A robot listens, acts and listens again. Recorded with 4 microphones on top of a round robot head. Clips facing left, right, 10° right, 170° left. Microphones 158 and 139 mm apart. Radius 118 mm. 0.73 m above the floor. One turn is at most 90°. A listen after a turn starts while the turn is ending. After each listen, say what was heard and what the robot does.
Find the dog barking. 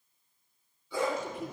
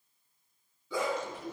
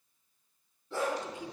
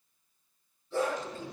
The dog barking: 60° right. Turn 60° right.
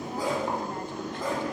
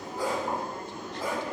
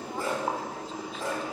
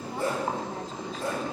The dog barking is now 10° right. Turn 10° right.
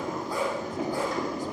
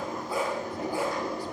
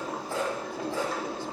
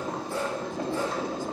Found it: a dog barking, straight ahead.